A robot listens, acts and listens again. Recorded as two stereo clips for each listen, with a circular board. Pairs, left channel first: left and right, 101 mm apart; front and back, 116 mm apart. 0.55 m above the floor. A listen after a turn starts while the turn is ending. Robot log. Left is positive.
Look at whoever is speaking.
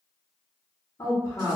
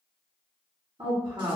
note: The woman speaking: 140° left.
cmd yaw +140
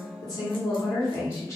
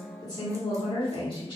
note: The woman speaking is now 35° left.
cmd yaw +35
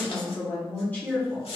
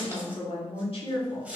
note: The woman speaking is now 20° left.
cmd yaw +20
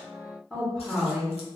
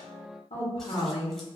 end: Found it: a woman speaking, straight ahead, 1 to 2 m away.